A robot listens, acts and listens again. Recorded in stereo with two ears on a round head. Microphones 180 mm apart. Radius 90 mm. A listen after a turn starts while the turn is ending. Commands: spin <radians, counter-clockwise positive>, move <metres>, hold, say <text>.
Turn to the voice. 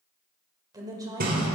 spin -0.35
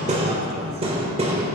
hold
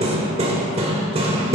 hold
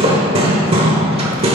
say I heard a woman speaking, but can't make it out now. It was about straight ahead or 140° right.